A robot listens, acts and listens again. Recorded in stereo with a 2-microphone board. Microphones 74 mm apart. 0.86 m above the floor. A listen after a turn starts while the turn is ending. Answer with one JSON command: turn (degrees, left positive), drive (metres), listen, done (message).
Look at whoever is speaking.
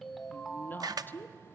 {"turn": 25}
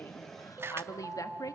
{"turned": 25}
{"turn": 130}
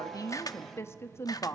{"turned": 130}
{"turn": 40}
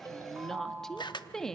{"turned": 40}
{"done": "Found it: a woman speaking, straight ahead, 1 to 2 m away."}